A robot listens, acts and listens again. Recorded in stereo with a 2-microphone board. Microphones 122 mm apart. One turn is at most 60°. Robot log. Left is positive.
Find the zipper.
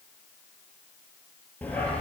cmd idle
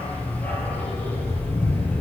cmd idle
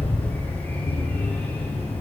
end: I can't make out a zipper to turn to.